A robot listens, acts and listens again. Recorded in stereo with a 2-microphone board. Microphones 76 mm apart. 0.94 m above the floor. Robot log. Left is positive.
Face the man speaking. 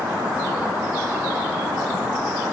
cmd idle
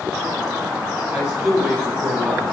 cmd yaw -30
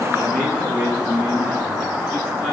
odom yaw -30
note: So it is at 25° left.
cmd yaw +25
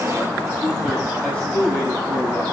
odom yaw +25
note: The man speaking is now 10° left.
cmd yaw +10
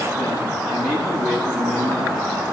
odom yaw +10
end: Facing the man speaking, over 4 m away.